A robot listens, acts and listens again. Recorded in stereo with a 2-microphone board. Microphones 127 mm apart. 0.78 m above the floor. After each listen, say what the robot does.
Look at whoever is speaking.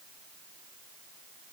Keep listening.
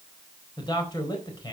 Turn 35° left.
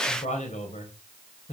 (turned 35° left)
Turn 110° left.
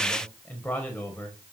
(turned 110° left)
Turn 15° left.
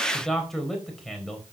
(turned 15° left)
Facing the man speaking.